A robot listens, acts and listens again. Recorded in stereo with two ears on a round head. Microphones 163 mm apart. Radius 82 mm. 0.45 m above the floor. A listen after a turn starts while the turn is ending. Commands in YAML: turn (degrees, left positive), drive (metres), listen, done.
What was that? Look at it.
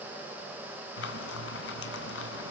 turn: 70
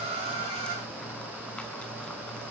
done: "Facing the frying, 2 to 4 m away."